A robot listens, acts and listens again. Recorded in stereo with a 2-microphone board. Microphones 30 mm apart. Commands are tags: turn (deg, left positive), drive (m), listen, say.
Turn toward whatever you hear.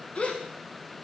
<turn deg="50"/>
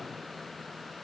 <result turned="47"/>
<listen/>
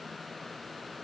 <say>I heard a gasp, but can't make it out now. It was about straight ahead or 85° left.</say>